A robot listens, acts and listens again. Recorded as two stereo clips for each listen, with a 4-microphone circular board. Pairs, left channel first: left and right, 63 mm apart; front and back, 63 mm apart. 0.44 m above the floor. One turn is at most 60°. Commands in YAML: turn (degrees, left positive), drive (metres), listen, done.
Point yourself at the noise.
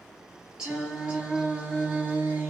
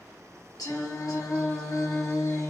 turn: -35
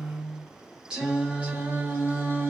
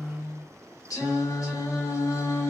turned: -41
turn: -40
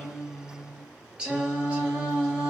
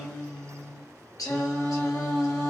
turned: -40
turn: -25
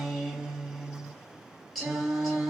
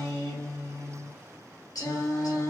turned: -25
done: "Found it: singing, straight ahead, 1 to 2 m away."